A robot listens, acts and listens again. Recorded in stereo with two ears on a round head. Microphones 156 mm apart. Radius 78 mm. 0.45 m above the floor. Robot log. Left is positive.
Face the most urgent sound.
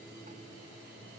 cmd idle
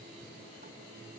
cmd idle
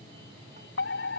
note: The fire alarm: about 70° left or 110° left.
cmd yaw +70
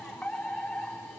end: Found it: a fire alarm, straight ahead.